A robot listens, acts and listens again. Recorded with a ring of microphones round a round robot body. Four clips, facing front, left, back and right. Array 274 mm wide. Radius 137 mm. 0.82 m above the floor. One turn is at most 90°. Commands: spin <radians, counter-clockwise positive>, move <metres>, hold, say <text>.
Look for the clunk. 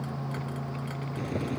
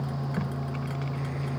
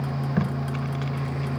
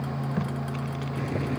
hold
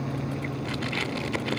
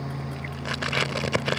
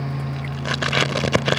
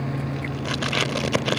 hold
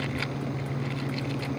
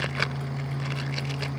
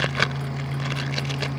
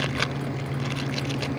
say I can't make out a clunk to turn to.